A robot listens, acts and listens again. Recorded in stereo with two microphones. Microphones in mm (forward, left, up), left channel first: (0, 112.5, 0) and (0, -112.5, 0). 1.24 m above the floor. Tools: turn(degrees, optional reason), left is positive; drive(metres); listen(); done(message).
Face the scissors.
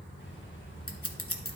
turn(degrees=75, reason="The scissors: about 75° left or 105° left.")
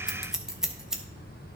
done("Facing the scissors, under 1 m away.")